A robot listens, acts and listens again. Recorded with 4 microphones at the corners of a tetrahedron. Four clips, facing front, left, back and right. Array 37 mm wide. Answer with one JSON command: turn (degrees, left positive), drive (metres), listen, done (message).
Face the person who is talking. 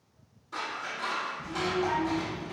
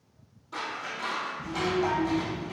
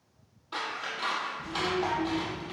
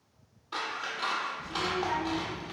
{"turn": 110}
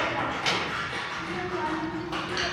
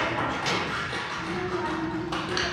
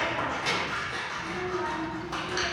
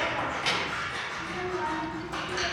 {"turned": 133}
{"turn": -25}
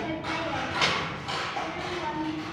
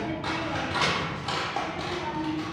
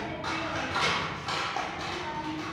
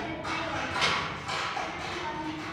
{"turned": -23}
{"done": "Facing the child speaking."}